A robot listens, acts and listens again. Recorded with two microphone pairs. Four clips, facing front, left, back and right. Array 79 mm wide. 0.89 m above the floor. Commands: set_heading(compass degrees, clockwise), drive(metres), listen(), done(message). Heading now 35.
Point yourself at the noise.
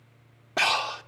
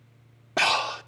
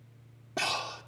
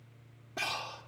set_heading(335)
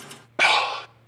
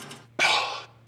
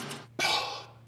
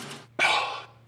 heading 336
done("Facing the breathing.")